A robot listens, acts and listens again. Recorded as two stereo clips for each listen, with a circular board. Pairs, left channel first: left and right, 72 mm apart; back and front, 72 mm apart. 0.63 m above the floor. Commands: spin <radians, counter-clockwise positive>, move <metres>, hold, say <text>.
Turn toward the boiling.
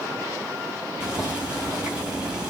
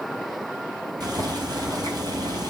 spin -0.26
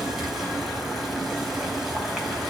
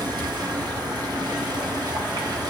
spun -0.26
say Found it: boiling, straight ahead, 2 to 4 m away.